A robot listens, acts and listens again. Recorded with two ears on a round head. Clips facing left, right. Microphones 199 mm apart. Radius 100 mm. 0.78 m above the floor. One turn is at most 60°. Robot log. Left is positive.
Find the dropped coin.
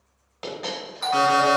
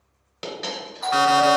note: The dropped coin: about 35° right or 145° right.
cmd yaw -35
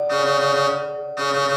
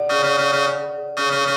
cmd idle
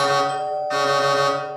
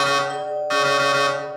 end: I heard a dropped coin, but can't make it out now. It was about straight ahead or 110° right.